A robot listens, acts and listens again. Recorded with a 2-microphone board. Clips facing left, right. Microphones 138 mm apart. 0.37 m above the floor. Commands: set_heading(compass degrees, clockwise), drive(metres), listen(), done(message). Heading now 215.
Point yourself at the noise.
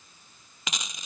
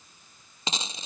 set_heading(245)
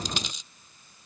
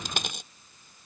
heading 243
set_heading(3)
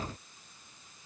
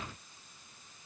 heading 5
done("Facing where the dropped coin came from. I can't hear it now.")